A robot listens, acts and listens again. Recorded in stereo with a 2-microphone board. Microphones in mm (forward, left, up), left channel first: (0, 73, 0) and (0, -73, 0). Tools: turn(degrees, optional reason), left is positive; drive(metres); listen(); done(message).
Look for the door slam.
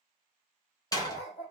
turn(degrees=25, reason="The door slam: about 25° left or 155° left.")
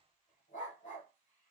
listen()
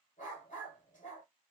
done("I heard a door slam, but can't make it out now. It was about straight ahead or 130° left.")